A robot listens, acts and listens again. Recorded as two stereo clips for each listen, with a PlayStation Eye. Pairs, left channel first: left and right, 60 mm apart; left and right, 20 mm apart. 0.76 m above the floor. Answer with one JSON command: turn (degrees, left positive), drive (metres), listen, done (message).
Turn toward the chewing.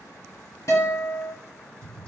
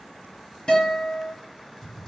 {"listen": true}
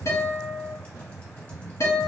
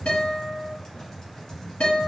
{"listen": true}
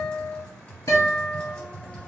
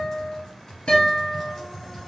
{"done": "I can't make out chewing, only a guitar and typing on a keyboard."}